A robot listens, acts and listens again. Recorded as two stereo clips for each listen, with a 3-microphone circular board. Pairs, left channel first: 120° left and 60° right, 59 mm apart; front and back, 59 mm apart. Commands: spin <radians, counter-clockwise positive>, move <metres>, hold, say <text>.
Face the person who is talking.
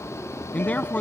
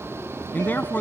spin 0.96
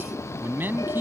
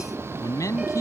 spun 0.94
spin -0.17
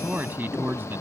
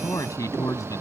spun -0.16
spin -0.17
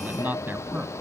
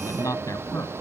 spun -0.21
say Facing the man speaking.